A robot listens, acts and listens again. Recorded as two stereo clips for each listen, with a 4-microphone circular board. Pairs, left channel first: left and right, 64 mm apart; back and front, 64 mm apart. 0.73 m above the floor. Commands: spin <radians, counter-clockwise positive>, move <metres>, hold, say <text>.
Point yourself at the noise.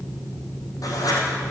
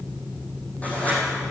spin 2.01
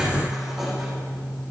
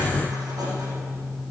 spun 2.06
hold
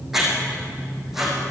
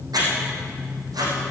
say Found it: writing, straight ahead.